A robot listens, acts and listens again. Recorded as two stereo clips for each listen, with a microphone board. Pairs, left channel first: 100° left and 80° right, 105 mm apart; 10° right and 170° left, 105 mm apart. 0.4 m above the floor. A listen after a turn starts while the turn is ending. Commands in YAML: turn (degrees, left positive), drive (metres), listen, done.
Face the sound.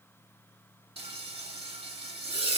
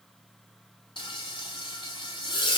turn: -50
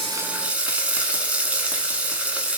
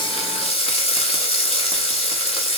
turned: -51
done: "Found it: frying, straight ahead."